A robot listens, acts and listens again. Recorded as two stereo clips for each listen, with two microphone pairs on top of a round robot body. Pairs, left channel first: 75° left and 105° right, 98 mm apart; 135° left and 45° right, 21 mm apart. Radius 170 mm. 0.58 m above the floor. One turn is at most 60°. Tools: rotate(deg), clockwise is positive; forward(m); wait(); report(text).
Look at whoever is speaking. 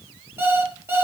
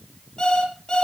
wait()
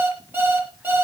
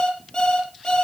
wait()
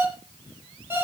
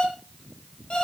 report("I can't make out anyone speaking to turn to.")